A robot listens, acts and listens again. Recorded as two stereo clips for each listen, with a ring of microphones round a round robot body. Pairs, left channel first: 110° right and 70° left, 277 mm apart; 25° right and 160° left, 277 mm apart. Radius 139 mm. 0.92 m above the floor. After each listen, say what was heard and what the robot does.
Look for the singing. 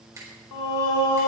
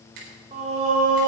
The singing: 140° right. Turn 140° right.
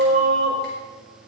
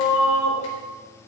Facing the singing.